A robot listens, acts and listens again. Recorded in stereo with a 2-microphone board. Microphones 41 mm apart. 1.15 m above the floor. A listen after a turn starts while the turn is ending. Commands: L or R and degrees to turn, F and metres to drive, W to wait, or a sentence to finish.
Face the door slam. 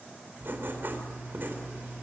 W
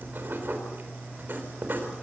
W
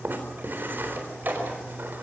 R45
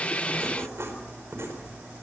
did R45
W
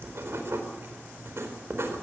I heard a door slam, but can't make it out now. It was about straight ahead or 90° right.